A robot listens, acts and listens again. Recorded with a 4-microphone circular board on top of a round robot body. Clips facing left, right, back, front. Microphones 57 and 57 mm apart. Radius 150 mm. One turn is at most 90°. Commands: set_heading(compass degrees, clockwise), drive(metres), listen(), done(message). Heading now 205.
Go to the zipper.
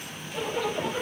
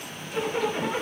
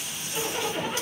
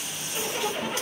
set_heading(295)
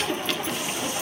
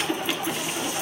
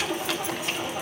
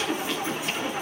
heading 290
set_heading(305)
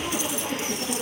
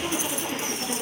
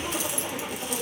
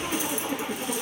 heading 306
drive(1.0)
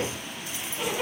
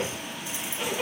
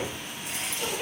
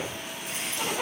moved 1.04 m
drive(1.0)
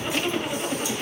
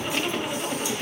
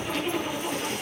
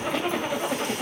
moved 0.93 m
drive(1.0)
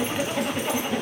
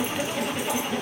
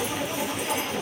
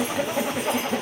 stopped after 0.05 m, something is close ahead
done("I am next to the zipper.")